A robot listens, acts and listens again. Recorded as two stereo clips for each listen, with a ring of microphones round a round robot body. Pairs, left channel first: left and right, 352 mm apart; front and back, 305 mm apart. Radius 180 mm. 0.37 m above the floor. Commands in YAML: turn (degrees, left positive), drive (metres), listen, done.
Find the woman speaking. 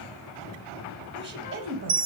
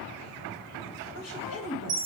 turn: -40
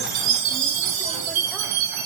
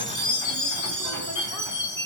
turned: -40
listen: true
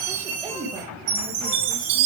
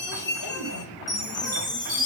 turn: -15
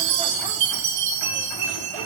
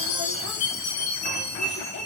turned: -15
listen: true
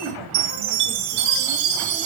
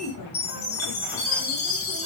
listen: true
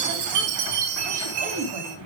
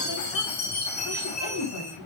turn: -20
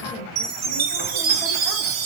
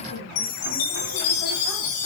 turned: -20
listen: true
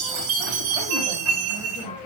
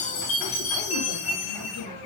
listen: true
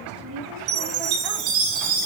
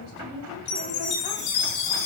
done: "Facing the woman speaking, 2 to 4 m away."